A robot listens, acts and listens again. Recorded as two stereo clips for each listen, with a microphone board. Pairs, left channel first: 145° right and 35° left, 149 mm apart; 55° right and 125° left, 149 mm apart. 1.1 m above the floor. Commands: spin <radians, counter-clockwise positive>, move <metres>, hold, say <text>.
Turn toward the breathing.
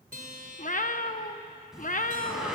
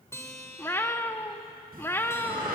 spin 2.09
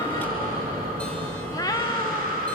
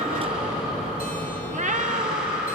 spin 0.70
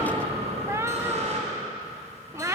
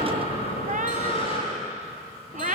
spin -0.17
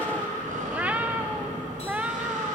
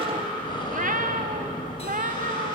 say Found it: breathing, straight ahead.